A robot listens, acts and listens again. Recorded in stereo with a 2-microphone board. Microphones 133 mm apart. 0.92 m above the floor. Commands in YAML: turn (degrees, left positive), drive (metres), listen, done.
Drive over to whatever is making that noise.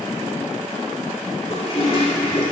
turn: 45
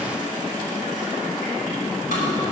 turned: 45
listen: true
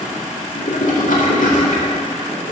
turn: 90
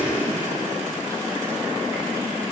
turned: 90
listen: true
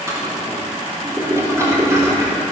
turn: -25
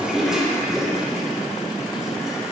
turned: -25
drive: 1.0
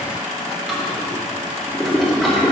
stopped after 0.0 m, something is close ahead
done: "Blocked. The toilet flushing is further on, straight ahead."